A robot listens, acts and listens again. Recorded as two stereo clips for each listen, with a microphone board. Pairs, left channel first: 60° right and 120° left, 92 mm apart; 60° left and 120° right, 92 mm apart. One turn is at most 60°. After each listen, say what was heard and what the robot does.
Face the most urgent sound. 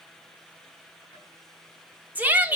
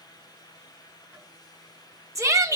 The shout: 170° right. Turn 60° right.
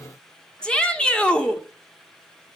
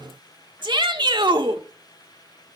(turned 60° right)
The shout is now 140° right. Turn 60° right.
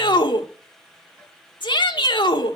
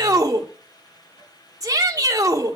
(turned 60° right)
The shout is now 75° right. Turn 60° right.
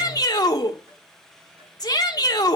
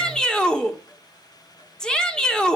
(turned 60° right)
The shout is now 20° right. Turn 20° right.
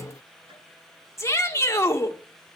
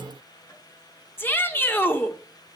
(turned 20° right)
Found it: a shout, straight ahead, 1 to 2 m away.